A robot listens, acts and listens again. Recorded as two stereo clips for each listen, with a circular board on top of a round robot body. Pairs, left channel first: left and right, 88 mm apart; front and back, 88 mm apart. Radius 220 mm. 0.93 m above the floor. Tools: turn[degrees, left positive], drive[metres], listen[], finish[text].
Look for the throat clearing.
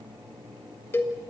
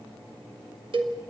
Action: listen[]
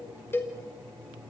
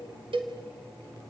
Action: listen[]
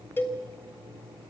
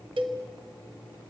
Action: finish[I can't make out throat clearing, only a cowbell.]